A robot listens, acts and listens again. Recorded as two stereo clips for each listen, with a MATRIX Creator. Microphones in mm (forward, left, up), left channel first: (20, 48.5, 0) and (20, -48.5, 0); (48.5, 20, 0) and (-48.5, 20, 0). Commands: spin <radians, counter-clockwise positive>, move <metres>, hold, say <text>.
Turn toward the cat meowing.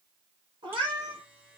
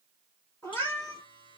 spin -1.05
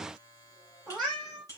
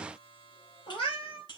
say Found it: a cat meowing, straight ahead.